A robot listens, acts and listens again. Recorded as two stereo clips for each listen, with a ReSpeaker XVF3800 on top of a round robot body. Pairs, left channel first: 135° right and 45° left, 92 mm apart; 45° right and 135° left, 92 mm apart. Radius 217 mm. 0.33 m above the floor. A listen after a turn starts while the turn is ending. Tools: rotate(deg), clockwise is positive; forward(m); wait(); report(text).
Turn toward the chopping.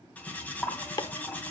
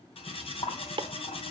rotate(-175)
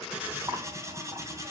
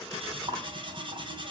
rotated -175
wait()
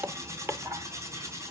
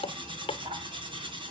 rotate(20)
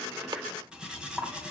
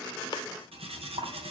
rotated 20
wait()
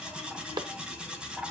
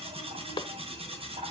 report("Facing the chopping, under 1 m away.")